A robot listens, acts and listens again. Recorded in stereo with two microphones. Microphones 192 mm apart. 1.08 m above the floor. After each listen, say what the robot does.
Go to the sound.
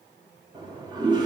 Turn 25° right.
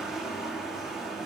Drive 1.0 m forward.
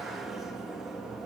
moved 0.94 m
Drive 1.0 m forward.
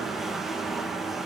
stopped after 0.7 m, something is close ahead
I am next to the toilet flushing.